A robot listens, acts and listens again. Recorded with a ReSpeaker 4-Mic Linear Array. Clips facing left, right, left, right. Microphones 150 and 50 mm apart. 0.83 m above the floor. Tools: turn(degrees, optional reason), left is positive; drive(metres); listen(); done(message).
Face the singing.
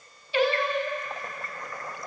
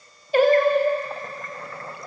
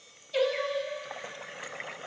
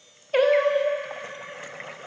turn(degrees=-40, reason="The singing: about 40° right or 140° right.")
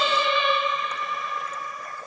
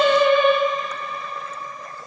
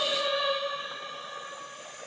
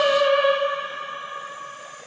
turn(degrees=-35, reason="The singing: about 35° right or 145° right.")
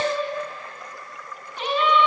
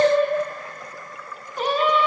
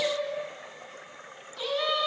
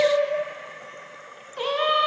turn(degrees=-40, reason="The singing: about 40° right or 140° right.")
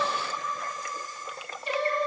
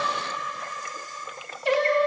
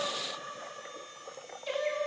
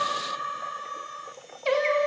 turn(degrees=-105, reason="So it is at 105° right.")
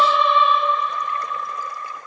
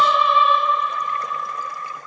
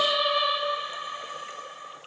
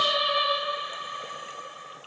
done("Facing the singing.")